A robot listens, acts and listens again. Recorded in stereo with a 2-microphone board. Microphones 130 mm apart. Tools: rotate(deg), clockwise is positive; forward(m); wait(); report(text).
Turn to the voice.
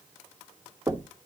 wait()
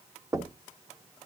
wait()
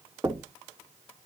report("I can't make out anyone speaking, only knocking.")